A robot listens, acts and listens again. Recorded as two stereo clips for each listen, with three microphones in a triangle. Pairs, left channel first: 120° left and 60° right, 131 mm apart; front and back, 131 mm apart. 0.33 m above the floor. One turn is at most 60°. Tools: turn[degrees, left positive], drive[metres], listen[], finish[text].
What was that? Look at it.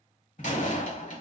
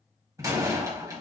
Thought: The door slam: 120° left.
Action: turn[60]
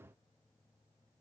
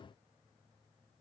Thought: Nothing new. It was at 60° left.
Action: turn[60]
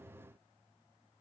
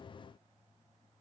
Action: finish[Facing where the door slam came from. I can't hear it now.]